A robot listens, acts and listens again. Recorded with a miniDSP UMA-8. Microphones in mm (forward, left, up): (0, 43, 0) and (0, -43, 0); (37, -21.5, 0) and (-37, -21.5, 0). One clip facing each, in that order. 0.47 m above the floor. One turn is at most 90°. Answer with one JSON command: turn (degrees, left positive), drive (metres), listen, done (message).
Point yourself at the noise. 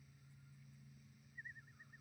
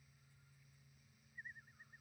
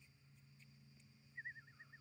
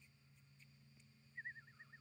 {"listen": true}
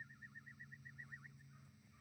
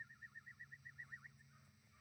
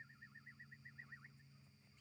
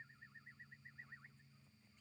{"listen": true}
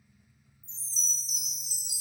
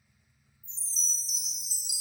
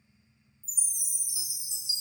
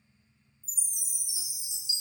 {"turn": 50}
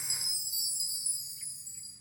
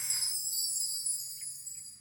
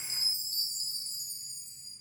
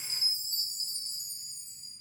{"turn": 10}
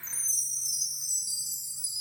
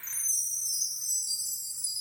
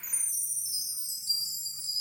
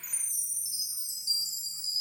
{"done": "Found it: a chime, straight ahead, 1 to 2 m away."}